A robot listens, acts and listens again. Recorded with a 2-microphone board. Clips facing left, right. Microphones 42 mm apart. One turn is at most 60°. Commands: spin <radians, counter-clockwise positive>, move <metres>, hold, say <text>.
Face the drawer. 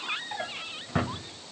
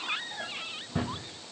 spin 1.05
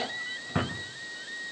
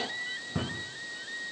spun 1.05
spin 0.87
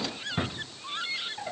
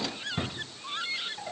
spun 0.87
spin 0.26
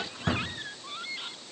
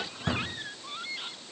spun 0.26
say Found it: a drawer, straight ahead.